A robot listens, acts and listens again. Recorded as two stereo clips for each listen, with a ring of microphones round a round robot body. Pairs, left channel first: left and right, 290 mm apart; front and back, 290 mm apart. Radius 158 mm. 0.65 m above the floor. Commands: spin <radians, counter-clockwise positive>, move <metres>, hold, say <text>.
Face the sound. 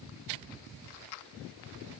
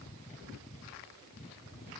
hold
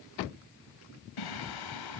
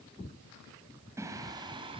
spin 1.83
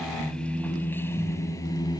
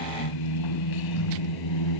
spin 0.26
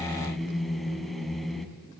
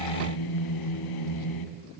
say Found it: singing, straight ahead.